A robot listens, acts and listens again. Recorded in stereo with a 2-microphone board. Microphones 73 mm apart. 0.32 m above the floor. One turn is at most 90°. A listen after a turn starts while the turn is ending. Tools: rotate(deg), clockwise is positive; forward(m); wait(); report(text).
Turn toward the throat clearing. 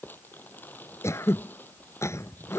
rotate(-40)
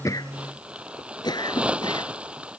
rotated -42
rotate(-90)
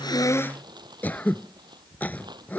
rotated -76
rotate(-25)
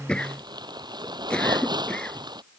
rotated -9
rotate(-15)
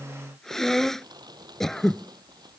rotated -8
report("Facing the throat clearing.")